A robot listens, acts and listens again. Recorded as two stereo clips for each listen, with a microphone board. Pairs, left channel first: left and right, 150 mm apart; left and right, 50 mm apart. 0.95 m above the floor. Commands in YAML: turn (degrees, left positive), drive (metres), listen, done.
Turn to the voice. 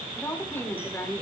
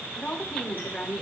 turn: 30
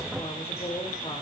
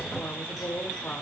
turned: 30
turn: 135
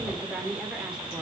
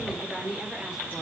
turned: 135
done: "Facing the woman speaking."